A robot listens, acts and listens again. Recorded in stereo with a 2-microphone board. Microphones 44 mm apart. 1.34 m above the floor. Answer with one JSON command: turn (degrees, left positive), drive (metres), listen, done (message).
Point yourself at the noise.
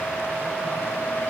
{"listen": true}
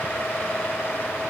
{"listen": true}
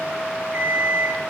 {"turn": -25}
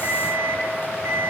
{"turn": -130}
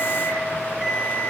{"turn": -20}
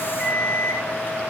{"done": "Facing the alarm clock."}